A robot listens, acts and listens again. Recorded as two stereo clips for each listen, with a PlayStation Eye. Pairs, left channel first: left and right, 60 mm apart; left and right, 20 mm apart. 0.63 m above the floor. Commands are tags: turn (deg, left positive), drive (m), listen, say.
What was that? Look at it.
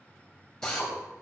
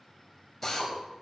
<turn deg="30"/>
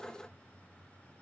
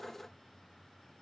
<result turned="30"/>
<listen/>
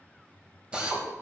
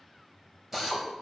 <turn deg="-20"/>
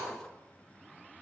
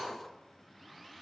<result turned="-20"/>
<listen/>
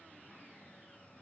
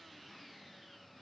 <listen/>
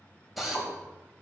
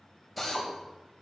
<say>Facing the drill, 2 to 4 m away.</say>